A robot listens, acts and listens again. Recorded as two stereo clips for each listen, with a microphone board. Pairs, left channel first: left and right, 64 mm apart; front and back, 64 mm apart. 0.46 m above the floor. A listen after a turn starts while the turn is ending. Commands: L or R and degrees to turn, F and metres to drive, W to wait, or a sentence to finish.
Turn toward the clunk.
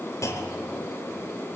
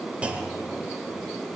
L110
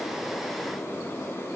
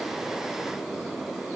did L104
I heard a clunk from this way, but can't make it out now.